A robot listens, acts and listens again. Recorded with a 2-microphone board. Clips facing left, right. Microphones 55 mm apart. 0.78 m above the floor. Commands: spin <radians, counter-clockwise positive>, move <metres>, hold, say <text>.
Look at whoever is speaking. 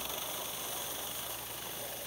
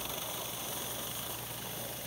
hold
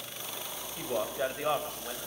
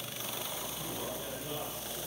spin 1.57
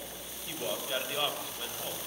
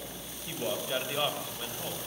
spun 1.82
say Facing the man speaking, over 4 m away.